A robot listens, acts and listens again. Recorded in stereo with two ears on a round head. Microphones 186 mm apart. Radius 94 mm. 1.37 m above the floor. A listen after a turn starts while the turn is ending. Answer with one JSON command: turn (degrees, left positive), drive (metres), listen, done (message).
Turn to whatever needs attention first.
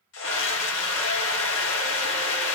{"turn": 65}
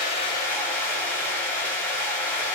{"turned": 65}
{"turn": 10}
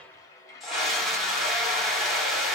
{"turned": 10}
{"done": "Found it: a scream, straight ahead, 1 to 2 m away."}